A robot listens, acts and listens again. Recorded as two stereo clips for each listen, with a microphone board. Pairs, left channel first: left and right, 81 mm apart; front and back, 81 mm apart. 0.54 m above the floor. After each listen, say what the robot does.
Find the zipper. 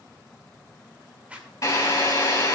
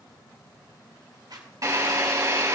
Turn 160° right.
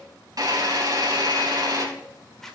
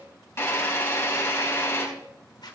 Facing the zipper.